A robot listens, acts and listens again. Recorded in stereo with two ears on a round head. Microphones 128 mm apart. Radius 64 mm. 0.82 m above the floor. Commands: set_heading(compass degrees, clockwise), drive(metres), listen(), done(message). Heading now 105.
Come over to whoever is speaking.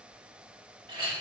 listen()
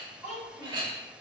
set_heading(75)
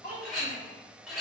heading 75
set_heading(295)
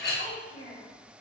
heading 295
set_heading(250)
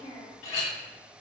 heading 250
set_heading(240)
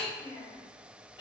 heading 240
drive(1.0)
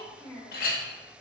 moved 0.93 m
drive(1.0)
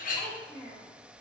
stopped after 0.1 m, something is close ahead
set_heading(230)
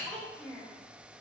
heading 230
done("I am next to the child speaking.")